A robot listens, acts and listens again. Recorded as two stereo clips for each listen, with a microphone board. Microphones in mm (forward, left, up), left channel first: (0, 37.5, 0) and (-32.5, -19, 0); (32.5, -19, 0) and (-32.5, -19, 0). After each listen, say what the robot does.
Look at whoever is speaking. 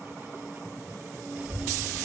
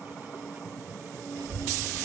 Turn 170° left.
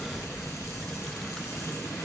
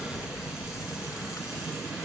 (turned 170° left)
Turn 20° right.
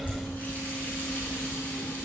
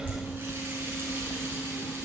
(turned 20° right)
Facing the child speaking.